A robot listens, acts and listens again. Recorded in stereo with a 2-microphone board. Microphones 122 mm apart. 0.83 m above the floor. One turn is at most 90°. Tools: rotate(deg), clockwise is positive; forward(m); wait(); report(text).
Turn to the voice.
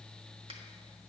wait()
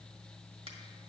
wait()
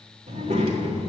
rotate(65)
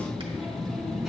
report("Found it: a child speaking, straight ahead, 1 to 2 m away.")